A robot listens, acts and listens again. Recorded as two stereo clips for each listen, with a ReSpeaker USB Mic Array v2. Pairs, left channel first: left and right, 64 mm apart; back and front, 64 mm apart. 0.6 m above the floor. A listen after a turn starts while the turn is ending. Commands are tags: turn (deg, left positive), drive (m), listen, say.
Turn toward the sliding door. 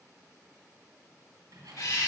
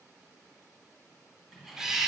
<turn deg="-85"/>
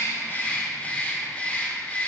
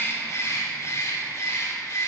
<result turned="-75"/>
<turn deg="-10"/>
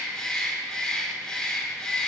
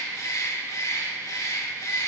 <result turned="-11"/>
<listen/>
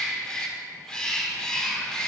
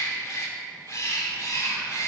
<say>I heard a sliding door from this way, but can't make it out now.</say>